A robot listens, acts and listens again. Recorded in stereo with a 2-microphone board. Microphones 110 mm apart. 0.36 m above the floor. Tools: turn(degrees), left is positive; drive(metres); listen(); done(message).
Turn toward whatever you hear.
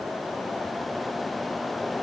listen()
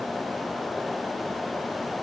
listen()
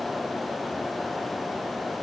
done("I can't make out anything.")